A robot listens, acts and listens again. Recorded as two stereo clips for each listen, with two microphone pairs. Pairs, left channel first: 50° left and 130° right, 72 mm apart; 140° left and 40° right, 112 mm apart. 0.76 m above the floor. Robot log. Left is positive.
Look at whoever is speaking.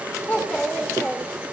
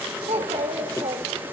note: The child speaking: 20° right.
cmd yaw -20
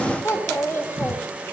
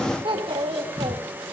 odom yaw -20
end: Found it: a child speaking, straight ahead, 2 to 4 m away.